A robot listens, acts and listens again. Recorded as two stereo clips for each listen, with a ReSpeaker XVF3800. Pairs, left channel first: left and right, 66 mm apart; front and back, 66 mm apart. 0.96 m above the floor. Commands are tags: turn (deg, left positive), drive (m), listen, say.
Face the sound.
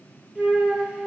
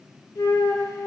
<turn deg="-20"/>
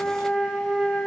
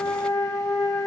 <say>Found it: a flute, straight ahead.</say>